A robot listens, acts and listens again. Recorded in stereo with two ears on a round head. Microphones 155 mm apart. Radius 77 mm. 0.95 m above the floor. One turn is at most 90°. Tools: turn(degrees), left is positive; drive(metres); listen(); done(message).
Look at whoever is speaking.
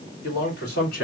turn(degrees=65)
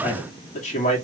turn(degrees=45)
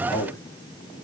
turn(degrees=20)
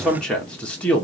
turn(degrees=10)
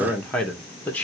turn(degrees=10)
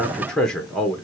done("Facing the man speaking, 1 to 2 m away.")